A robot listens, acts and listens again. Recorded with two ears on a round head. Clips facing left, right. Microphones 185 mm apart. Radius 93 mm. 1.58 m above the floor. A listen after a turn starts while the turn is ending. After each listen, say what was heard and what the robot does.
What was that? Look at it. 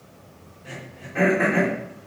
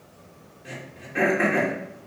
The throat clearing: about 25° right or 155° right. Turn 25° right.
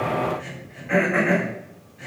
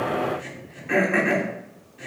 So it is at 125° right. Turn 125° right.
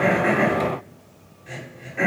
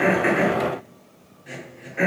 The throat clearing is now 10° right. Turn 10° right.
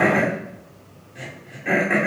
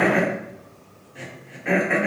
Facing the throat clearing, 2 to 4 m away.